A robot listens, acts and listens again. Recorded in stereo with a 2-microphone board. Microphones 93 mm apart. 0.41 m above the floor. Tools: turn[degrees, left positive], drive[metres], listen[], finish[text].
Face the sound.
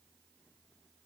Action: listen[]
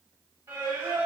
Thought: The singing: about 30° right or 150° right.
Action: turn[-30]
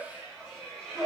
Action: finish[Found it: singing, straight ahead.]